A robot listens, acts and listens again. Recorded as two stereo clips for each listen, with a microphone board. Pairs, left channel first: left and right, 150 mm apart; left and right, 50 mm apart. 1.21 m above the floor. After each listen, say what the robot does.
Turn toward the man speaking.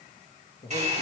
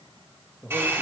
Turn 55° left.
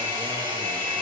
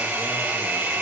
Keep listening.
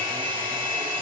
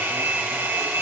Keep listening.
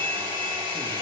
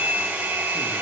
I heard a man speaking, but can't make it out now. It was about straight ahead or 70° left.